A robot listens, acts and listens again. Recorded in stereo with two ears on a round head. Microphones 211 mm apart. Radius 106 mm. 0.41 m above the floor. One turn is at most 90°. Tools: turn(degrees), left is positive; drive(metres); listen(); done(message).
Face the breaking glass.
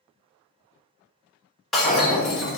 turn(degrees=30)
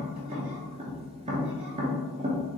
listen()
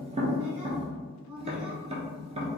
done("I heard breaking glass, but can't make it out now. It was about 30° right or 150° left.")